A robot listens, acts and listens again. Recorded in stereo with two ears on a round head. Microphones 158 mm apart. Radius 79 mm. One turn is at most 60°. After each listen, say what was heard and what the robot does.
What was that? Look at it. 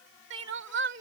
The crying: about 65° right or 115° right. Turn 60° right.
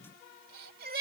So it is at 55° right. Turn 55° right.
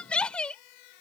Facing the crying.